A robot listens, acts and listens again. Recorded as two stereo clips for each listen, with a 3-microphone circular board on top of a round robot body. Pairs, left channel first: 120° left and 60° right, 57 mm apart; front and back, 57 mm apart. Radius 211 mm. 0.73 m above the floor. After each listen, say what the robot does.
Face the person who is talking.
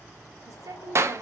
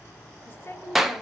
Turn 50° right.
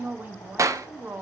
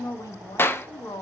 Found it: a woman speaking, straight ahead, 1 to 2 m away.